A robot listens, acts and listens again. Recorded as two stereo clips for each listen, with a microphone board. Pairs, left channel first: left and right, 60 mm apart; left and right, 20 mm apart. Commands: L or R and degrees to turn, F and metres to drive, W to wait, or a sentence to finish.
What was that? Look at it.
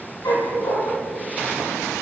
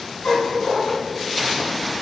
L90
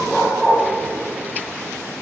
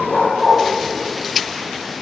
Facing the dog barking, over 4 m away.